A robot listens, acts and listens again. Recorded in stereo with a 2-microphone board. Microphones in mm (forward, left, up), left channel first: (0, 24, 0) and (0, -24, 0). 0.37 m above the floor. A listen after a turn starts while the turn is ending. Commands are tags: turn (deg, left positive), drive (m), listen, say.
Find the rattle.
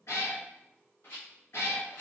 <turn deg="50"/>
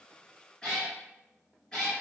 <listen/>
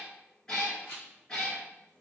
<turn deg="65"/>
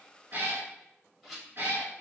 <say>Facing the rattle, 1 to 2 m away.</say>